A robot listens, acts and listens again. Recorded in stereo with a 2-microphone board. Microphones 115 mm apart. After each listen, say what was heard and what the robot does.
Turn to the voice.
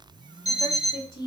The woman speaking: about 35° left or 145° left. Turn 35° left.
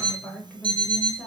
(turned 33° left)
Facing the woman speaking.